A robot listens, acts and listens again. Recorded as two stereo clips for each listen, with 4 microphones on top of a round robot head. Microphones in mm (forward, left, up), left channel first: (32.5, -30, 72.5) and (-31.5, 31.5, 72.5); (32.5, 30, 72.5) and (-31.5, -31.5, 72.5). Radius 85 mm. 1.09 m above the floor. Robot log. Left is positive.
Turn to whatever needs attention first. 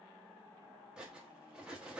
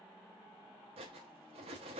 cmd idle
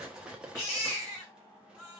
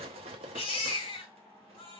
note: The baby crying: 20° left.
cmd yaw +20
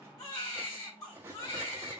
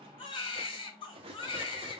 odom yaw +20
end: Facing the baby crying.